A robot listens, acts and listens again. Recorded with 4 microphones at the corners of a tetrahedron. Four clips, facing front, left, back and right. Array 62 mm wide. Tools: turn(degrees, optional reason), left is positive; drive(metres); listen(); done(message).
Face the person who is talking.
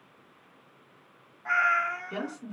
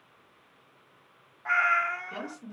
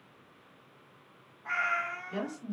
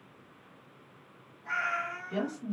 turn(degrees=10, reason="The woman speaking: 10° left.")
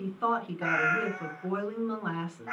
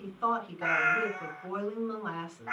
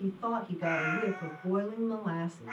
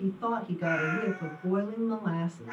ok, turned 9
done("Facing the woman speaking.")